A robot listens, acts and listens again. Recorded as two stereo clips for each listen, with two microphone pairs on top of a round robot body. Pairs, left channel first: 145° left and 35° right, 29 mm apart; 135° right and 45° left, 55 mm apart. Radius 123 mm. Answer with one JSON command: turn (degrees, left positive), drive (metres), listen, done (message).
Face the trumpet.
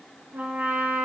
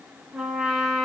{"turn": -30}
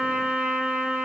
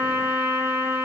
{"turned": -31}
{"done": "Found it: a trumpet, straight ahead."}